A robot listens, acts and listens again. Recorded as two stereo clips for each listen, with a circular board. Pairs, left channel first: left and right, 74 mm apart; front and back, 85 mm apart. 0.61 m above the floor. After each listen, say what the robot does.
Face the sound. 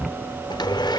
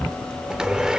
Turn 100° left.
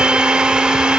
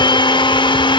Turn 15° right.
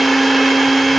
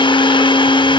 Facing the blender.